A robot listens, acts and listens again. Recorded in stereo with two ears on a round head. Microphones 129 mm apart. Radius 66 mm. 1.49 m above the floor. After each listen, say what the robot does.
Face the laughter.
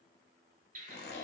Keep listening.
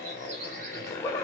Turn 20° left.
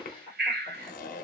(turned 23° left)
Turn 35° left.
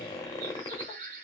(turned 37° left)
Keep listening.
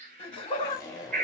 Turn 140° left.
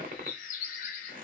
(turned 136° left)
Keep listening.
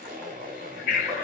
Turn 15° left.
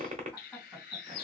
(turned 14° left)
Found it: laughter, straight ahead, 2 to 4 m away.